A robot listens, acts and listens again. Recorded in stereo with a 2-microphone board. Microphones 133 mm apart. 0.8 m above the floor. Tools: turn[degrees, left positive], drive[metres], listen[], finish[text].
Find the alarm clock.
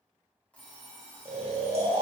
Action: turn[30]
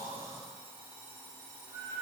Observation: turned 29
Thought: So it is at 20° right.
Action: turn[-20]
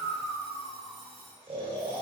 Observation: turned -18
Action: finish[Found it: an alarm clock, straight ahead.]